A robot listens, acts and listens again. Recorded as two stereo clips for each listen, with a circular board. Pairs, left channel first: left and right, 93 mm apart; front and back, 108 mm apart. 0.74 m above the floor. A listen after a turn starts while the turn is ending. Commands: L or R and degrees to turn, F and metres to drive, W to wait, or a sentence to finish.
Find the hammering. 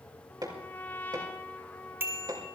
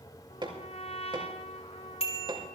R135
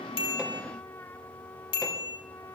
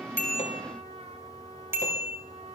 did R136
W
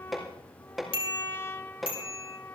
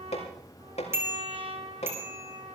Facing the hammering.